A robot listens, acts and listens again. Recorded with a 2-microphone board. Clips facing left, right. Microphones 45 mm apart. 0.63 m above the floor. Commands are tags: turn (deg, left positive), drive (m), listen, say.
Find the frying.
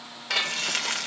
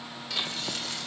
<turn deg="65"/>
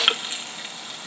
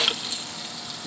<turn deg="35"/>
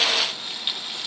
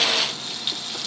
<turn deg="10"/>
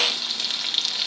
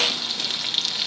<say>Facing the frying.</say>